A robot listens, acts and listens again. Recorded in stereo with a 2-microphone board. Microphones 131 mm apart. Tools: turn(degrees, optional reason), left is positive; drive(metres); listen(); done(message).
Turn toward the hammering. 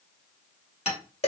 turn(degrees=55, reason="The hammering: about 55° left or 125° left.")
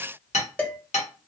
turn(degrees=70, reason="So it is at 70° left.")
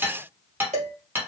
turn(degrees=-15, reason="The hammering is now 15° right.")
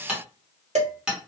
done("Facing the hammering.")